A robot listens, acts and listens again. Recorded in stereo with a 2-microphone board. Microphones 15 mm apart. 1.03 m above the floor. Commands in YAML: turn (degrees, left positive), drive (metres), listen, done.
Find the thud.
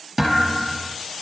turn: -20
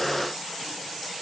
listen: true
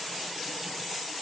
done: "I heard a thud, but can't make it out now. It was about straight ahead or 140° right."